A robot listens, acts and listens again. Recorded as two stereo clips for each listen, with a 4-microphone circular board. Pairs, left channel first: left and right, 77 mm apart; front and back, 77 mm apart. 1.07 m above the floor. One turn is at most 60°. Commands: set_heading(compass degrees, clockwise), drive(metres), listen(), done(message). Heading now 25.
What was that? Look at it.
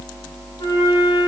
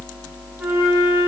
set_heading(325)
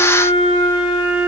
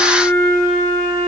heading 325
set_heading(265)
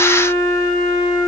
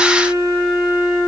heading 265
done("Found it: a flute, straight ahead, over 4 m away.")